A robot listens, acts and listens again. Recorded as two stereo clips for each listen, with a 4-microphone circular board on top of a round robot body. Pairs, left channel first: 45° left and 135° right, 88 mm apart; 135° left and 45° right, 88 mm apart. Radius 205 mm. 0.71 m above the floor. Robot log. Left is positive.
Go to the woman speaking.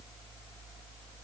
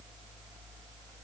cmd idle
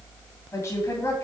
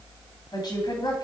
note: The woman speaking: 105° left.
cmd yaw +105
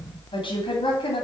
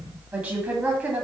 note: The woman speaking is now 35° left.
cmd yaw +35
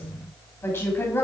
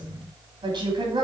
note: The woman speaking is now 15° right.
cmd yaw -15
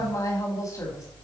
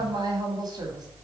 cmd fwd 1.0
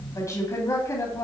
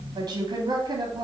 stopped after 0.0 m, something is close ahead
end: Blocked. The woman speaking is further on, straight ahead.